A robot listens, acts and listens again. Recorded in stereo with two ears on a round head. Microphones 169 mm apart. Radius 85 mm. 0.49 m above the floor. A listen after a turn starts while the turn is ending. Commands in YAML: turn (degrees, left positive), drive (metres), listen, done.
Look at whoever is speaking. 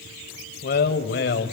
turn: 60
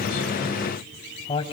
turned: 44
turn: 30
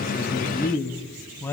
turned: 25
turn: 10
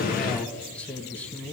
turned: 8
turn: 10
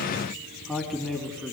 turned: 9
done: "Facing the man speaking, 2 to 4 m away."